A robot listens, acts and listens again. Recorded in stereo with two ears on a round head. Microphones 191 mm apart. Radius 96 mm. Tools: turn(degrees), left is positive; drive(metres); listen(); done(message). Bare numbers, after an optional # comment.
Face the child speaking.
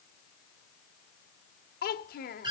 # The child speaking: about 45° left or 135° left.
turn(45)
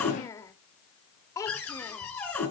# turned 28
# So it is at 15° left.
turn(15)
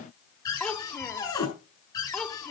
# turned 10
done("Facing the child speaking, 1 to 2 m away.")